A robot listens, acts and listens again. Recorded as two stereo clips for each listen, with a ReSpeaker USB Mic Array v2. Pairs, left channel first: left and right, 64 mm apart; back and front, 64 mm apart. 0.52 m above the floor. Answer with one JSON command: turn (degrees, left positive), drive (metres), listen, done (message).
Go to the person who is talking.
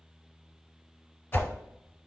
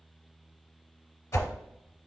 {"listen": true}
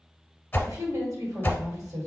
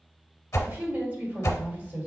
{"turn": -60}
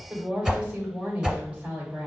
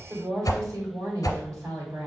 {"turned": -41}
{"turn": -20}
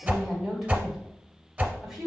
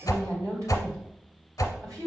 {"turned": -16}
{"drive": 1.0}
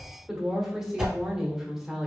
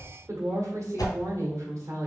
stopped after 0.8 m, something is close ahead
{"done": "I am next to the woman speaking."}